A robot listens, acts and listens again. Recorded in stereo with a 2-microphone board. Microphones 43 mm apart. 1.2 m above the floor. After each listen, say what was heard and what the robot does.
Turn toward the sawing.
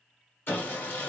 The sawing: about 50° left or 130° left. Turn 50° left.
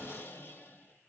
So it is at 70° left. Turn 70° left.
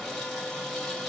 The sawing is now 10° left. Turn 10° left.
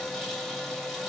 Facing the sawing, 1 to 2 m away.